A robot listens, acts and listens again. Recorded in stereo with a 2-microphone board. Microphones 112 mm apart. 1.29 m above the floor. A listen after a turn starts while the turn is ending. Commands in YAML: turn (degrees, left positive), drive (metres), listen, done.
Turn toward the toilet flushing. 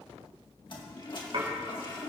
turn: 45
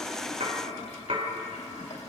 turn: 95
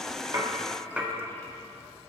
listen: true
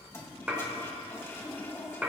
turn: 25
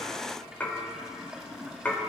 done: "Facing the toilet flushing."